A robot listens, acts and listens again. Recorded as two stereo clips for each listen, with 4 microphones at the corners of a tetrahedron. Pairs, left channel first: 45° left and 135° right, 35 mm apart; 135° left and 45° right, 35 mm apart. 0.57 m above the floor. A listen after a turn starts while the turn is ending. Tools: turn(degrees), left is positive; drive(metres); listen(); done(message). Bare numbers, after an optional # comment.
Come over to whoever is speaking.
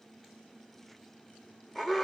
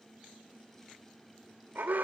listen()
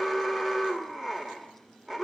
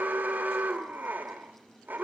listen()
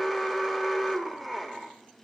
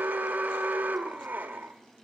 done("I can't make out anyone speaking to turn to.")